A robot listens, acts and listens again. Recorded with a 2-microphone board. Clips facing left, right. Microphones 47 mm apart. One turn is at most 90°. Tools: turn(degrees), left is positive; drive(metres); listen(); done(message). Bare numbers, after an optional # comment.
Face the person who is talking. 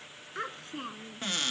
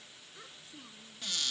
# The child speaking: about 60° left or 120° left.
turn(60)
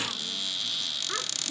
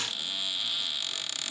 listen()
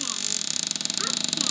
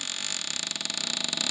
listen()
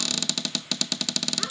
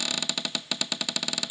done("I heard a child speaking, but can't make it out now. It was about straight ahead or 60° left.")